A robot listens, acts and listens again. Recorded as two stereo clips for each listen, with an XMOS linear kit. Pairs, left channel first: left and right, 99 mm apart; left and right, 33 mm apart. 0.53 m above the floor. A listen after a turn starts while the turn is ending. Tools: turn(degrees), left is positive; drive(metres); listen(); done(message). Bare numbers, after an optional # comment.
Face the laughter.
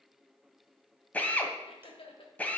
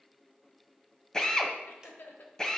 # The laughter: about 60° left or 120° left.
turn(60)
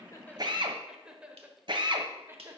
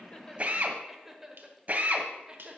# So it is at 25° right.
turn(-25)
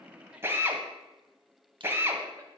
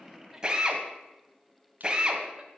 listen()
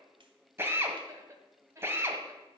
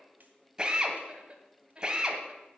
# The laughter is now 30° right.
turn(-30)
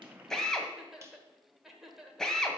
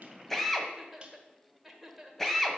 done("Found it: laughter, straight ahead.")